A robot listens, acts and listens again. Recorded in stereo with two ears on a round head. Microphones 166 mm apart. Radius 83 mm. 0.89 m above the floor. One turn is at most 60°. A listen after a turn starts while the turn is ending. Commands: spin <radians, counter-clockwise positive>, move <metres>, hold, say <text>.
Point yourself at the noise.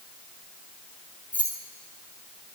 spin 0.52
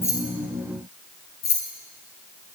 spin 1.05
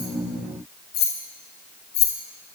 spin 1.05
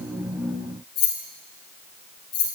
spin 0.52
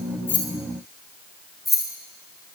say Found it: keys jangling, straight ahead.